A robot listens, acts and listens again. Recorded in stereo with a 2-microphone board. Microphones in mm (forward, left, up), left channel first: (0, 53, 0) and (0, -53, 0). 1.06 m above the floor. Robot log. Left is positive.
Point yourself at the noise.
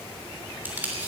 note: The tape being pulled: about 15° right or 165° right.
cmd yaw -15
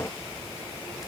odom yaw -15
cmd idle
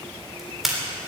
end: Found it: tape being pulled, straight ahead, 2 to 4 m away.